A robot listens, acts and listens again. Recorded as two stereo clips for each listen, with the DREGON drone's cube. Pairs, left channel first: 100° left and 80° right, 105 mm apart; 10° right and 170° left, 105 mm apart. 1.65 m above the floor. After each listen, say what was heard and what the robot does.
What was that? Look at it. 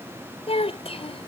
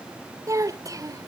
The child speaking: 115° left. Turn 115° left.
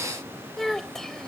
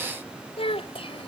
The child speaking is now 15° left. Turn 15° left.
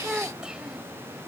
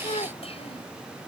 Found it: a child speaking, straight ahead.